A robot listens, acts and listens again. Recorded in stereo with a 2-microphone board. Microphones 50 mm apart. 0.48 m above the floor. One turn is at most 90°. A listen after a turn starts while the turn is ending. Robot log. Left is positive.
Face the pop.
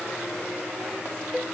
cmd idle
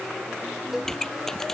cmd yaw +30
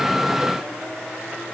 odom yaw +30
cmd idle
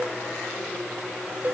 end: I heard a pop, but can't make it out now. It was about 20° right or 140° left.